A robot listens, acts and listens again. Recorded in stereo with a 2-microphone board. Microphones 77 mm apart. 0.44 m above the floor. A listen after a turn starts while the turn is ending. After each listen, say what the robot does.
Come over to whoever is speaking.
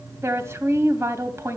Turn 35° right.
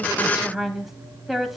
Drive 1.0 m forward.
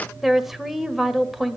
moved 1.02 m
Drive 1.0 m forward.
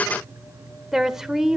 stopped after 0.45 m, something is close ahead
Turn 10° right.
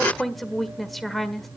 I am next to the woman speaking.